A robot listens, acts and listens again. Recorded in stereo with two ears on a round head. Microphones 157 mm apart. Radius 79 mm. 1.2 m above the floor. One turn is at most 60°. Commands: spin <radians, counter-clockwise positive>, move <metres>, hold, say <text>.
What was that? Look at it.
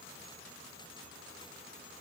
hold
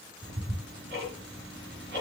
spin -1.05
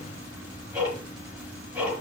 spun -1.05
spin -0.17
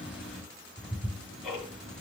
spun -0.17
say Found it: ticking, straight ahead, over 4 m away.